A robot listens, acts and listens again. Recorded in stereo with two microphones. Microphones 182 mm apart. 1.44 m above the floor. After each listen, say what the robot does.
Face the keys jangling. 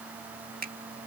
Keep listening.
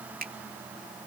Keep listening.
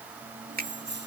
Turn 90° right.
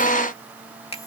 Keep listening.
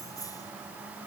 Turn 20° left.
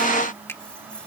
Keep listening.
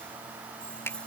Found it: keys jangling, straight ahead.